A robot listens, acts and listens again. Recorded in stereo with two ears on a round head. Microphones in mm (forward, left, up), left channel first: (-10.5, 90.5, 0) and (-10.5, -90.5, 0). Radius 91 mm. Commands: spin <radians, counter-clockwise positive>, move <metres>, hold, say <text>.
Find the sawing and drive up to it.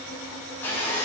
spin 0.52
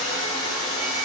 spin 2.44
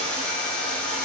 move 1.0
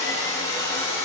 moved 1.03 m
spin 0.26
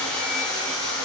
move 1.0
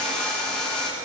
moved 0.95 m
move 1.0
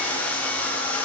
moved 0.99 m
move 1.0
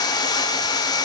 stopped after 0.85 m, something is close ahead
spin 0.35
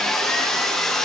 say I am next to the sawing.